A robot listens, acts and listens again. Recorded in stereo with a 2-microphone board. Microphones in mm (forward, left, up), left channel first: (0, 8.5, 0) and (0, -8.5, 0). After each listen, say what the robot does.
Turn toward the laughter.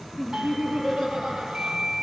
Turn 90° right.
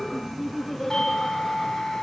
Found it: laughter, straight ahead, over 4 m away.